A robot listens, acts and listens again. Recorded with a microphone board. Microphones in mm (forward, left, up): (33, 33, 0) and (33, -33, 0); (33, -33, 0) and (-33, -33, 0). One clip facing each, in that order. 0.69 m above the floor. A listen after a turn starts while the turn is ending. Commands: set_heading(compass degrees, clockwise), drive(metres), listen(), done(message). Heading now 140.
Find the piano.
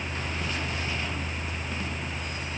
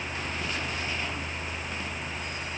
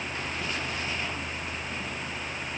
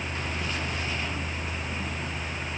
listen()
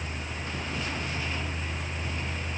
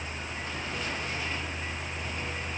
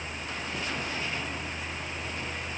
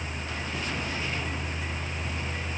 listen()
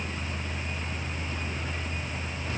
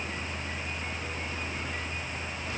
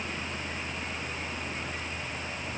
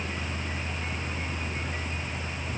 done("I can't make out a piano.")